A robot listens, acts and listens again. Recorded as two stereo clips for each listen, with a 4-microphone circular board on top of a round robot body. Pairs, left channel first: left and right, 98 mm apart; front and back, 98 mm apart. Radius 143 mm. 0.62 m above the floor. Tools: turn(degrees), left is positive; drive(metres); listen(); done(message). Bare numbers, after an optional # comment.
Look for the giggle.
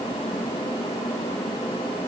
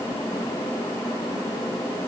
listen()
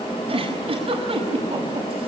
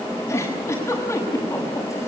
# The giggle: 65° right.
turn(-65)
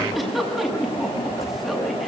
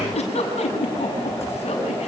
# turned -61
done("Facing the giggle, over 4 m away.")